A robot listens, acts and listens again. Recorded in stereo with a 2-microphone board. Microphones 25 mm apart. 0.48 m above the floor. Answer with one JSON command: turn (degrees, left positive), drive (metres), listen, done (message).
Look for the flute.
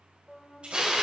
{"turn": 30}
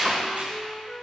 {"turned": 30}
{"turn": 155}
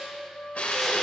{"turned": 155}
{"turn": 60}
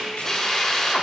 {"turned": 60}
{"listen": true}
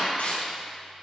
{"listen": true}
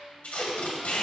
{"done": "Facing where the flute came from. I can't hear it now."}